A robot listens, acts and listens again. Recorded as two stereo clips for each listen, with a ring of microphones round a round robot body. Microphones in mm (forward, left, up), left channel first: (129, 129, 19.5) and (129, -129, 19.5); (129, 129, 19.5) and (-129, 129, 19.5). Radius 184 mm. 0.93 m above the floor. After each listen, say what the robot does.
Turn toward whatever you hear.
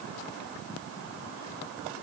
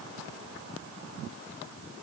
Keep listening.
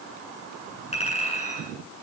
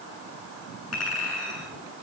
Turn 25° left.
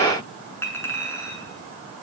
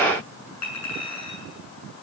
Turn 10° left.
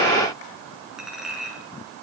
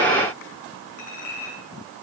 Facing the clink.